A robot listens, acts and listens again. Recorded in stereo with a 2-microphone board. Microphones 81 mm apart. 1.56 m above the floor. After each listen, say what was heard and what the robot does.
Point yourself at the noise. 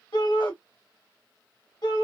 The shout: about 65° left or 115° left. Turn 65° left.
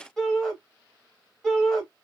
Facing the shout, 1 to 2 m away.